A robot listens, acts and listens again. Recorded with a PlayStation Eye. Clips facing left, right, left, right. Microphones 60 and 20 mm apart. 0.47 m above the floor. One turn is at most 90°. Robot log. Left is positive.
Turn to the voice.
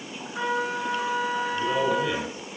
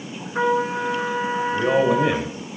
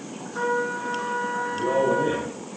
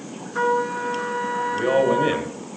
note: The man speaking: about 55° right or 125° right.
cmd yaw -55
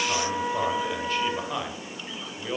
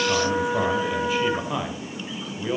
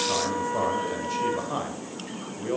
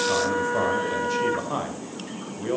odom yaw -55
end: Facing the man speaking.